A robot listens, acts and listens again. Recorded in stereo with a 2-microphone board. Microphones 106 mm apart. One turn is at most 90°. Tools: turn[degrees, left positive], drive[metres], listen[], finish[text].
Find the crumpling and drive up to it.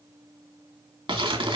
Thought: The crumpling: about 50° right or 130° right.
Action: turn[-50]
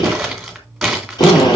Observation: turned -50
Action: drive[1.0]
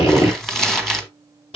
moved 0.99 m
Action: drive[1.0]
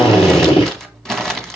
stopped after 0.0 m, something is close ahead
Action: finish[Arrived at the crumpling, straight ahead.]